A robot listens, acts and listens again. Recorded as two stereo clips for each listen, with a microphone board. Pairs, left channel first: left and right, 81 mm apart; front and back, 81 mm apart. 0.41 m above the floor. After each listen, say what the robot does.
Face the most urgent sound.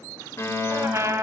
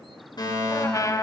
Turn 30° left.
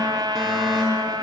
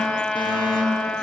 Found it: a fire alarm, straight ahead, over 4 m away.